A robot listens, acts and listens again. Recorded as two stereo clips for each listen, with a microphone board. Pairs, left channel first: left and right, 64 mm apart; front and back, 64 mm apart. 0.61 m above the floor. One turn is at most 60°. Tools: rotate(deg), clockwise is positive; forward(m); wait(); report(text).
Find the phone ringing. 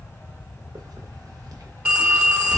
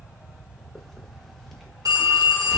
rotate(60)
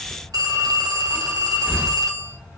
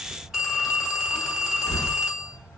rotate(60)
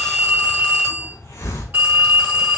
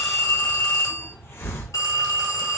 rotate(25)
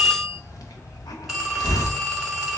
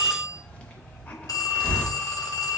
report("Found it: a phone ringing, straight ahead.")